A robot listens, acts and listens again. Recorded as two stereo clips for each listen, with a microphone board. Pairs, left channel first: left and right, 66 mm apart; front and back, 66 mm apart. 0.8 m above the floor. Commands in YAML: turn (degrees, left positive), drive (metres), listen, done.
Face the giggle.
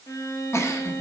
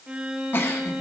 turn: 50
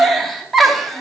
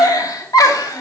done: "Facing the giggle."